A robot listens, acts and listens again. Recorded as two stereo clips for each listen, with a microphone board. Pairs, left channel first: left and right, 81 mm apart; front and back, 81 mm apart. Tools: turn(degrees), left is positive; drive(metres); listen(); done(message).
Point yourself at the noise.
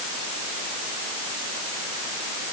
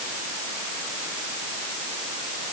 listen()
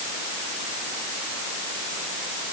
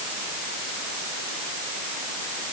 listen()
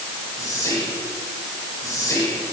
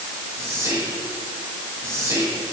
turn(degrees=130)
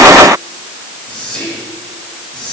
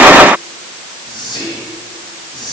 turn(degrees=10)
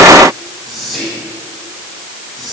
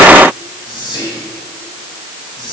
done("Facing the whispering.")